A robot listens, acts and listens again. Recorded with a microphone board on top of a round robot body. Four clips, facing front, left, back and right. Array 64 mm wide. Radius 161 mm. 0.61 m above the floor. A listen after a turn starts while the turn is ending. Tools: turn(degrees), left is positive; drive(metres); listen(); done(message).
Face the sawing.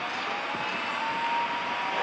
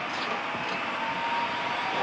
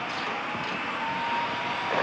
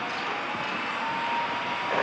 listen()
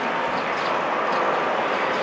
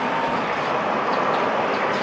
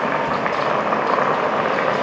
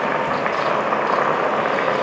listen()
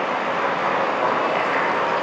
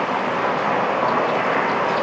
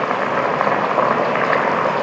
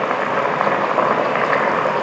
done("I can't make out sawing to turn to.")